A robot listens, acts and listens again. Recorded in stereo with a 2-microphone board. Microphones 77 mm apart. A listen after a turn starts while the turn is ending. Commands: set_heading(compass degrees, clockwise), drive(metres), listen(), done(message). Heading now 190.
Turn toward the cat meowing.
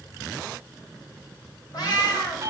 set_heading(125)
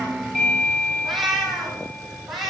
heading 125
done("Facing the cat meowing.")